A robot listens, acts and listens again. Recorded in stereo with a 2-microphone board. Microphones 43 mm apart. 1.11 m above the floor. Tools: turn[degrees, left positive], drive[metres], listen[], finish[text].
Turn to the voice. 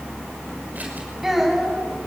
Action: turn[-30]
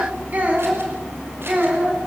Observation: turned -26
Thought: So it is at 140° right.
Action: turn[-140]
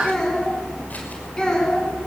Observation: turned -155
Thought: The child speaking is now 20° left.
Action: turn[20]
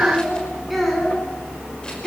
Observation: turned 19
Action: finish[Found it: a child speaking, straight ahead.]